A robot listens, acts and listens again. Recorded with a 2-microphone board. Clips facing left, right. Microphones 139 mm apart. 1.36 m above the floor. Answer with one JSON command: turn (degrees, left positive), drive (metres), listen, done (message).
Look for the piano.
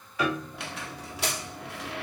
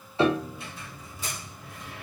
{"turn": -30}
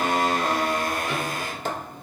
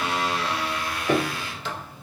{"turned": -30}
{"turn": -115}
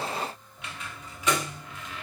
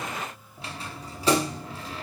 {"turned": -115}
{"turn": -35}
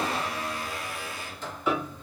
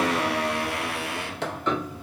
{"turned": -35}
{"turn": 10}
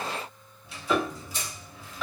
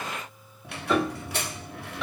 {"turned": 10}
{"done": "Found it: a piano, straight ahead."}